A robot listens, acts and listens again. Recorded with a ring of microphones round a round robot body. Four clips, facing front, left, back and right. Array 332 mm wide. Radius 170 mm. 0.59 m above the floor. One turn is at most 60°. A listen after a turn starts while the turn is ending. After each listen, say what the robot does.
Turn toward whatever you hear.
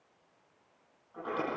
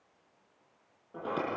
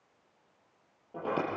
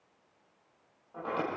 Turn 60° left.
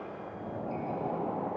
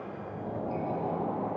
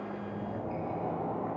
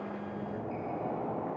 Turn 60° left.
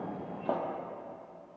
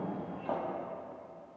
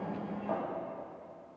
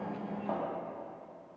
Found it: a sliding door, straight ahead, over 4 m away.